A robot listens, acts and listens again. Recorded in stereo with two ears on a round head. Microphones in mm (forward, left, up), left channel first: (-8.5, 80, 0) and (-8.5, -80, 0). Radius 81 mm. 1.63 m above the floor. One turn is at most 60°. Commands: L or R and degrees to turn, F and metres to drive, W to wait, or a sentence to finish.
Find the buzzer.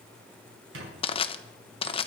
W
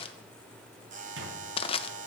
R45
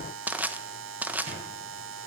R60
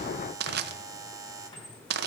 R20
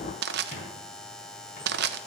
Found it: a buzzer, straight ahead.